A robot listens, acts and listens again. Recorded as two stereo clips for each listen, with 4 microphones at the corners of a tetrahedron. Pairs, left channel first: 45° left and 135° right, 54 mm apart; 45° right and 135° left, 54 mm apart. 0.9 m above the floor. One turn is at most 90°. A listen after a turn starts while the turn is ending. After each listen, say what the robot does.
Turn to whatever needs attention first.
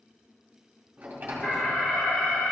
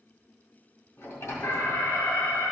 Turn 20° right.
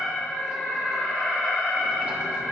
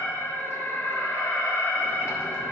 Found it: an alarm, straight ahead.